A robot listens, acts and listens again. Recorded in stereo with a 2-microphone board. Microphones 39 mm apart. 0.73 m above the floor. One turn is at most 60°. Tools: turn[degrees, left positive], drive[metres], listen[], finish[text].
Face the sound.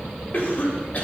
Thought: The cough: about 45° left or 135° left.
Action: turn[45]
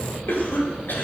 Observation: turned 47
Thought: So it is at 90° left.
Action: turn[60]
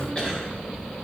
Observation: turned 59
Thought: Nothing new. It was at 30° left.
Action: turn[30]
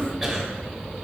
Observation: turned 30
Action: finish[Facing the cough, 2 to 4 m away.]